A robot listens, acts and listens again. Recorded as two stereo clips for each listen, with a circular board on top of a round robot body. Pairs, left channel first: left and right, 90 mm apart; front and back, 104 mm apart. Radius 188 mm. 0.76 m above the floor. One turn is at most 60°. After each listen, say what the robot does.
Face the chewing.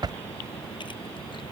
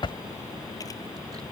Keep listening.
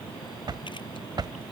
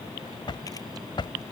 Keep listening.
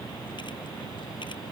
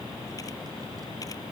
I can't make out chewing, only a drawer.